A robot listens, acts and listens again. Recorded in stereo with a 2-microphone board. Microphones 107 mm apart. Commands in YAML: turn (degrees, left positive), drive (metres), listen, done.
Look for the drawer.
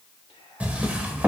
turn: -30
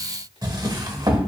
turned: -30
turn: -135
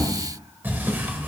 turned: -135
turn: -20
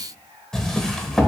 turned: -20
done: "Found it: a drawer, straight ahead."